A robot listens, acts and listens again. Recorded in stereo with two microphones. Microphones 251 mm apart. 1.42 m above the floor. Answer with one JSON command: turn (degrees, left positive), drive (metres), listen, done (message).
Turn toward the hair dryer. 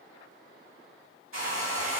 {"turn": -55}
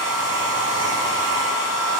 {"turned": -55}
{"turn": -60}
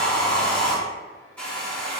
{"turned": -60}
{"done": "Facing the hair dryer."}